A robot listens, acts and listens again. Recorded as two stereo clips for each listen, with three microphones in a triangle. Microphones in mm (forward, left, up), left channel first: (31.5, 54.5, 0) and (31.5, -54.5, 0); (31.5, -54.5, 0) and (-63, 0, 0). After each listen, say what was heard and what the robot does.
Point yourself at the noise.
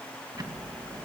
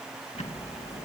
The ticking: 35° right. Turn 35° right.
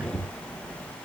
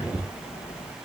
The ticking is now 10° right. Turn 10° right.
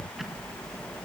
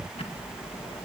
Found it: ticking, straight ahead.